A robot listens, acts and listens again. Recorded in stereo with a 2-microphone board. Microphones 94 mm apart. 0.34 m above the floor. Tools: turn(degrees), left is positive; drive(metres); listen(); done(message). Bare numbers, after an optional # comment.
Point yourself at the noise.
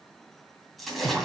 turn(30)
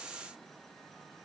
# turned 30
listen()
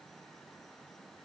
done("I heard a splash, but can't make it out now. It was about 30° right or 150° left.")